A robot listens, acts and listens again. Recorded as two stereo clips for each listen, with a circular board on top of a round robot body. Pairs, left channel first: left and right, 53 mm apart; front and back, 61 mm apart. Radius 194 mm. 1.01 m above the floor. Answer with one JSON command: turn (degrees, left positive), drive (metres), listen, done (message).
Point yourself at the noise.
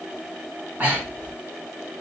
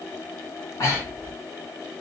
{"turn": -35}
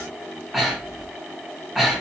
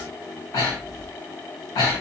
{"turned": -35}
{"turn": -10}
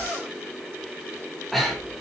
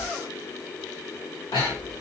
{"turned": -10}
{"done": "Found it: breathing, straight ahead, 1 to 2 m away."}